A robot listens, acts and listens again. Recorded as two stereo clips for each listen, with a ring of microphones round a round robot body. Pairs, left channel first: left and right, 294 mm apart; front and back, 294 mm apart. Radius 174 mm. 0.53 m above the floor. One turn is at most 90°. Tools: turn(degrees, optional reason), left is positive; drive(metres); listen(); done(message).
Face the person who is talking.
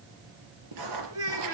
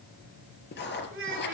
turn(degrees=-90, reason="The child speaking: 130° right.")
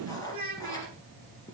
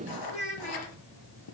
turn(degrees=-65, reason="The child speaking is now 65° right.")
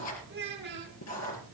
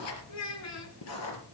turn(degrees=-30, reason="The child speaking is now 30° right.")
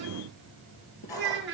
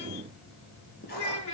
turn(degrees=-15, reason="The child speaking is now 15° right.")
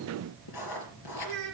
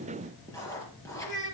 done("Facing the child speaking, over 4 m away.")